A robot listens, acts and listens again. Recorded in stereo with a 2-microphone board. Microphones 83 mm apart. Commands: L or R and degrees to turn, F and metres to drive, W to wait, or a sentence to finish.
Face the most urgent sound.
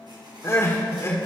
L30
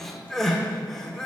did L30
Facing the crying.